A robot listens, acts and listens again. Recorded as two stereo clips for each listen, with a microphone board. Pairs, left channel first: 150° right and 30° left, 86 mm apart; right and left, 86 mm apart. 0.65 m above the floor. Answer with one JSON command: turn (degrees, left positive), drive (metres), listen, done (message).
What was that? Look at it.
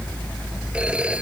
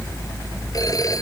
{"turn": -45}
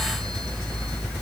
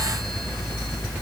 {"listen": true}
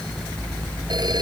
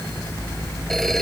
{"listen": true}
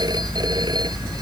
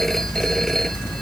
{"done": "I heard a phone ringing from this way, but can't make it out now."}